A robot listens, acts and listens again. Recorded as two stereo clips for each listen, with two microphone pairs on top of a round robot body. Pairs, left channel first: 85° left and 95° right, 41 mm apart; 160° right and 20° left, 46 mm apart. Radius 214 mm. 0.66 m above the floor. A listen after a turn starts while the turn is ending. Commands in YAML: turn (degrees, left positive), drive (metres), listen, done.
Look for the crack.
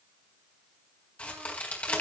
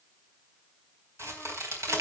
turn: 30
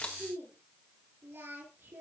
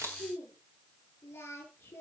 done: "Facing where the crack came from. I can't hear it now."